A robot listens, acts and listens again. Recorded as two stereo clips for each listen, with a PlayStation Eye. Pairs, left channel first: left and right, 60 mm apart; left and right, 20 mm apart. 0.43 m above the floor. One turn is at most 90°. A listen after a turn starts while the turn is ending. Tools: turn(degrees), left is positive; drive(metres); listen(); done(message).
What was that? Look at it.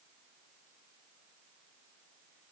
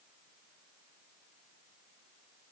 listen()
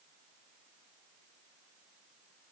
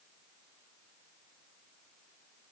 listen()
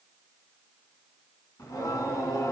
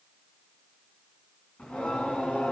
turn(degrees=90)
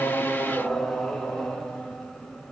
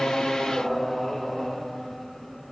done("Facing the singing, 2 to 4 m away.")